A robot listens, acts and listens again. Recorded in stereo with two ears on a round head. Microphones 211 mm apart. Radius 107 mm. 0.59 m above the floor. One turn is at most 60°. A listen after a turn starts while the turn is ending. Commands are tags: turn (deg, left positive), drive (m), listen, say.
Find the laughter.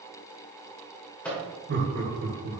<turn deg="-45"/>
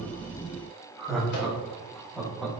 <say>Facing the laughter, over 4 m away.</say>